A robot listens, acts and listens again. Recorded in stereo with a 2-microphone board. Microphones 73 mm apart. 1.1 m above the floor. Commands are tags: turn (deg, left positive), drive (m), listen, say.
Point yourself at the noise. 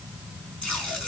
<turn deg="30"/>
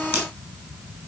<turn deg="-20"/>
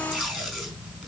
<say>Found it: tape being pulled, straight ahead, over 4 m away.</say>